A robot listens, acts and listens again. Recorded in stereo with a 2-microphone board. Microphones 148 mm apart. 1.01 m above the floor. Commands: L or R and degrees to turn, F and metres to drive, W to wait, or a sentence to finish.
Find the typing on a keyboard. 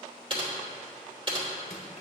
R35
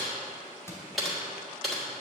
Found it: typing on a keyboard, straight ahead, 2 to 4 m away.